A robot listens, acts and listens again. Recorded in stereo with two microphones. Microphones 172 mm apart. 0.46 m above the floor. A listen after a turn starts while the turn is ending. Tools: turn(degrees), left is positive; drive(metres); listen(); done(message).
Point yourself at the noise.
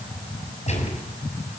turn(degrees=40)
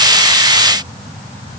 listen()
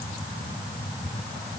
done("I heard a gunshot, but can't make it out now. It was about straight ahead or 100° left.")